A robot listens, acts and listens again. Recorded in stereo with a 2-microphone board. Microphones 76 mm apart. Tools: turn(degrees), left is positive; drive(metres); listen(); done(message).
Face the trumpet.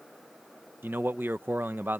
listen()
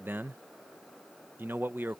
listen()
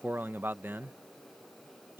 done("I can't make out a trumpet, only a man speaking.")